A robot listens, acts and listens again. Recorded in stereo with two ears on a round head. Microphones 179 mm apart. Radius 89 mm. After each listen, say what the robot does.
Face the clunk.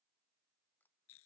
Keep listening.
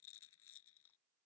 Keep listening.
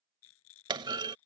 Turn 25° right.
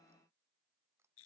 Keep listening.
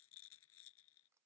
I heard a clunk, but can't make it out now. It was about straight ahead or 130° right.